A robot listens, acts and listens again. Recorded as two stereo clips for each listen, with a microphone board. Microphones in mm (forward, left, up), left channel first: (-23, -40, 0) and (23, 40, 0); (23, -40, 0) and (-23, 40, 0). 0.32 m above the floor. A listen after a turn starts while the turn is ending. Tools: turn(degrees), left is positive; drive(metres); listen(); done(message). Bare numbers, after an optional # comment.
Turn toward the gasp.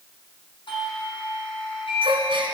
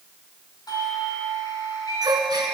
# The gasp: 75° left.
turn(75)
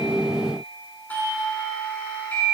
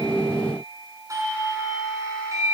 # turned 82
done("Facing where the gasp came from. I can't hear it now.")